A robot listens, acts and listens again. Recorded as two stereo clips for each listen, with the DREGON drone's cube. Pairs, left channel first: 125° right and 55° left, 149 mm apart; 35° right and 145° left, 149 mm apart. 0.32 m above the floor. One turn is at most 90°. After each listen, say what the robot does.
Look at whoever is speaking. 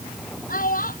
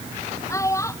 Turn 90° right.
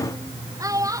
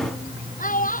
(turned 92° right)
Turn 10° right.
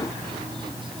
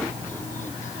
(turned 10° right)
Keep listening.
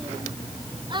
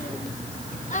Found it: a child speaking, straight ahead.